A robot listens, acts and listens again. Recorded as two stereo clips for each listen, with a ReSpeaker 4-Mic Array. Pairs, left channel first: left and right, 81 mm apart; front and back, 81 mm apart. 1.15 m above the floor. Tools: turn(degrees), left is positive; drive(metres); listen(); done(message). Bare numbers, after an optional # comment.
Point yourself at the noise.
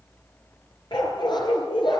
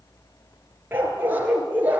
# The dog barking: 110° left.
turn(110)
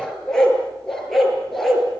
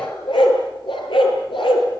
done("Found it: a dog barking, straight ahead.")